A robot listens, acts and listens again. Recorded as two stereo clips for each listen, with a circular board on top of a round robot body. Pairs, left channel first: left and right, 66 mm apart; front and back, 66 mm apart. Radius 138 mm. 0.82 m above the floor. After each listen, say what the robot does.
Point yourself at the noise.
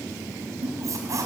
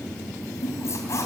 Turn 50° right.
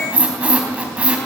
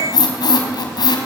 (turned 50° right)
Turn 15° right.
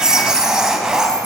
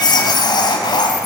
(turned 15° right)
Turn 10° right.
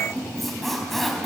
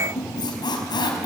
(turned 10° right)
Facing the squeak.